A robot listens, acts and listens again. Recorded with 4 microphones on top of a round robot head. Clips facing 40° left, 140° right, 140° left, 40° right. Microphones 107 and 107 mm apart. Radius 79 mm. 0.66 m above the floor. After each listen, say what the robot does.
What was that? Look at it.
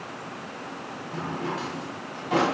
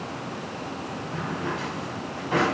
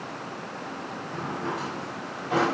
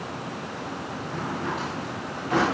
Turn 65° left.
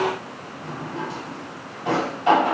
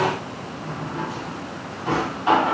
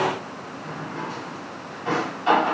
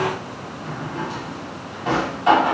Turn 15° left.
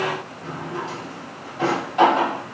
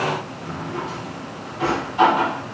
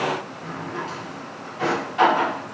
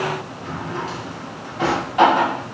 Facing the drawer.